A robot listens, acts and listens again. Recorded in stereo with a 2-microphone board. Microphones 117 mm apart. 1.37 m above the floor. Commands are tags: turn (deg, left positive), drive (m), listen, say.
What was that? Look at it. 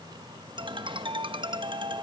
<turn deg="-45"/>
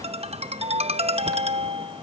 <turn deg="-85"/>
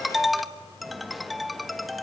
<say>Found it: a ringtone, straight ahead.</say>